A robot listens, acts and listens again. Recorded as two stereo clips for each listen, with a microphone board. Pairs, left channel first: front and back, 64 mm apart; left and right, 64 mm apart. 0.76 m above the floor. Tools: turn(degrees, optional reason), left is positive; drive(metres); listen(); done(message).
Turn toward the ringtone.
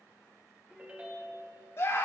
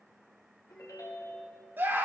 turn(degrees=110, reason="The ringtone: 110° left.")
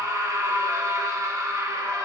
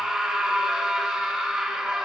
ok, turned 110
listen()
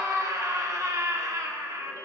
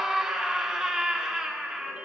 listen()
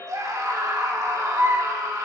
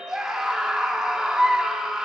turn(degrees=-20, reason="The ringtone is now 20° right.")
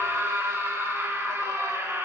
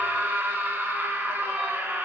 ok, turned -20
listen()
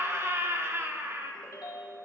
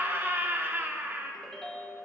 turn(degrees=10, reason="The ringtone is now 10° left.")
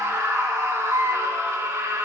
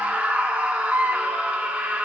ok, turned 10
listen()
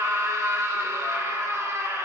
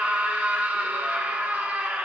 listen()
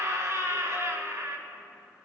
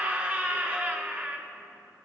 done("Facing where the ringtone came from. I can't hear it now.")